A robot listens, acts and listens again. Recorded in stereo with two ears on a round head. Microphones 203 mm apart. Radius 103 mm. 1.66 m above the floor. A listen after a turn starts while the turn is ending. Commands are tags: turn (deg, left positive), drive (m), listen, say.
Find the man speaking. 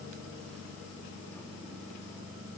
<listen/>
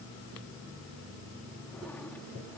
<listen/>
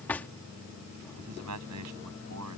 <turn deg="-70"/>
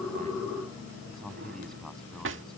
<say>Facing the man speaking.</say>